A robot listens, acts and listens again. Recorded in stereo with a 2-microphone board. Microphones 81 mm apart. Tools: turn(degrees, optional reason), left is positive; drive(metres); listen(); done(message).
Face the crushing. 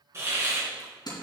turn(degrees=55, reason="The crushing: about 55° left or 125° left.")
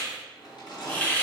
turn(degrees=65, reason="So it is at 65° left.")
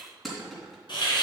done("Facing the crushing, 2 to 4 m away.")